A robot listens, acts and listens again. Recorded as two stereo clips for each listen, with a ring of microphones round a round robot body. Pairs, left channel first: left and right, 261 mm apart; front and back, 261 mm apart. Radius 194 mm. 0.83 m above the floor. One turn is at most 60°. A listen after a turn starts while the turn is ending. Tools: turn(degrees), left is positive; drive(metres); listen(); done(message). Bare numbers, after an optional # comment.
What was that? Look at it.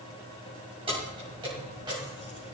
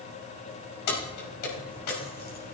# The keys jangling: 10° right.
turn(-10)
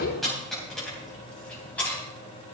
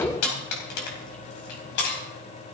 done("Found it: keys jangling, straight ahead.")